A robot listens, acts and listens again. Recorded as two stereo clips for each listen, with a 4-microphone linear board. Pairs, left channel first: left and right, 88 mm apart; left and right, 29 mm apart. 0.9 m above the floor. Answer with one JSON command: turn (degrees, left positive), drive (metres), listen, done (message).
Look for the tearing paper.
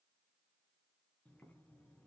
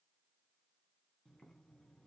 {"listen": true}
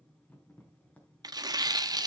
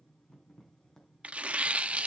{"turn": -45}
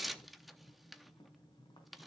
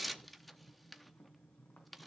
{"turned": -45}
{"done": "Facing the tearing paper."}